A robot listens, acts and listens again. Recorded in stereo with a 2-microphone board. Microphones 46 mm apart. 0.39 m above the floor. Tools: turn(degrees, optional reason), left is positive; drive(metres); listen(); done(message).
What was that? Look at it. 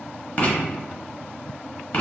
turn(degrees=35, reason="The writing: about 35° left or 145° left.")
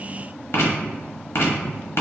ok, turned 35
turn(degrees=105, reason="So it is at 105° left.")
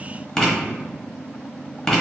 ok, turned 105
done("Found it: writing, straight ahead, under 1 m away.")